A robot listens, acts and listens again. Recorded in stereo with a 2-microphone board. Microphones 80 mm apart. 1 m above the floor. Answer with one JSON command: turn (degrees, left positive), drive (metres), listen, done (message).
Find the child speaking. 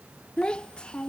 {"turn": 30}
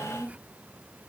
{"turn": -15}
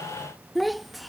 {"done": "Found it: a child speaking, straight ahead."}